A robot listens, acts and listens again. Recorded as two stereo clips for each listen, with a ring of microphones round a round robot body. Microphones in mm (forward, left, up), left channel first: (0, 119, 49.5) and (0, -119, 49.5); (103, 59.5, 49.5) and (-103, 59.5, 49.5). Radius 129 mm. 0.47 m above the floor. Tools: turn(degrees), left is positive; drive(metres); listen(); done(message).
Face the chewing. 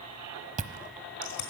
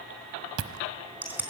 turn(degrees=-150)
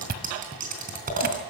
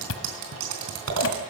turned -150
turn(degrees=-35)
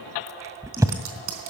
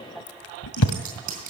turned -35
turn(degrees=-10)
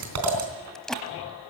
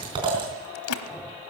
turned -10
done("Found it: chewing, straight ahead.")